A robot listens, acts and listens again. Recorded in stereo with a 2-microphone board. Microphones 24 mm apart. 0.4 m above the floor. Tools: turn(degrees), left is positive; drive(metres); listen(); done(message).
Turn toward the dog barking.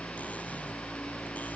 listen()
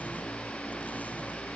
listen()
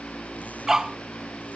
turn(degrees=-15)
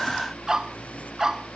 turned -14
turn(degrees=-20)
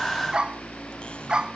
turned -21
turn(degrees=-35)
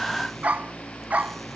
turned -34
turn(degrees=-110)
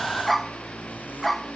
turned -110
done("Found it: a dog barking, straight ahead.")